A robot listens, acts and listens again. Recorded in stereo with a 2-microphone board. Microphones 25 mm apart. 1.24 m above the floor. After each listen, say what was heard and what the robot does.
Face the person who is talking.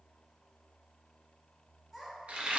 Turn 30° right.
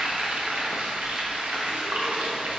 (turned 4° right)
Keep listening.
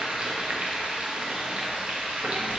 Keep listening.
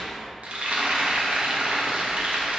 I heard a child speaking, but can't make it out now. It was about straight ahead or 170° right.